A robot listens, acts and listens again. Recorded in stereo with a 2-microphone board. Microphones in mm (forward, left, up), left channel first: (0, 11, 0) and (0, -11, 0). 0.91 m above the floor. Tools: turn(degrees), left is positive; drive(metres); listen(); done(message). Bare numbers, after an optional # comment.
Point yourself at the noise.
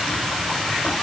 listen()
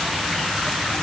listen()
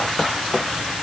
done("I can't make out anything to turn to.")